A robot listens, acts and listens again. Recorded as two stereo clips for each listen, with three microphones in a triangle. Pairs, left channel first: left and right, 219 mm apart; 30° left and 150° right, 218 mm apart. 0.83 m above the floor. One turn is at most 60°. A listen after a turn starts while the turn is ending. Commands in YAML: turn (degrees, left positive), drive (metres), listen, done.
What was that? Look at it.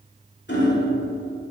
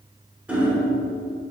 turn: 60
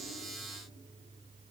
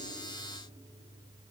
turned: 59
turn: 60
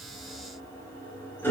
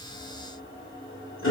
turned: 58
turn: 10
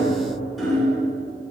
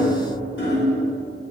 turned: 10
done: "Facing the hammering, 1 to 2 m away."